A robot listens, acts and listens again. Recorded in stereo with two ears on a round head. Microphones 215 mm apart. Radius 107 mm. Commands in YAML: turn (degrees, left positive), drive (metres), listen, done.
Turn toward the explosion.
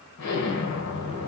turn: 75
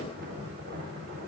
listen: true
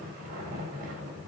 done: "I heard an explosion, but can't make it out now. It was about straight ahead or 30° left."